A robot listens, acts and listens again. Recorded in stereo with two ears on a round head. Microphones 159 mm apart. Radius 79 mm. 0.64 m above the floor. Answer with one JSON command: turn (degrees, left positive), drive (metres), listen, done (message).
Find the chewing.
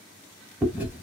{"turn": -30}
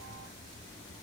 {"listen": true}
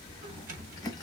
{"turn": 20}
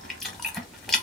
{"done": "Facing the chewing."}